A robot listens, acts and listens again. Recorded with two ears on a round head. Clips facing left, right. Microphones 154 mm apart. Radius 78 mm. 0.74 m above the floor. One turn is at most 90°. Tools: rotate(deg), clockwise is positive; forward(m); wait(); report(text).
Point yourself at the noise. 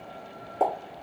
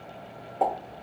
rotate(-45)
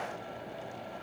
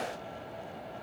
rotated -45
wait()
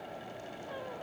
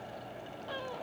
report("I heard a pop, but can't make it out now. It was about straight ahead or 90° left.")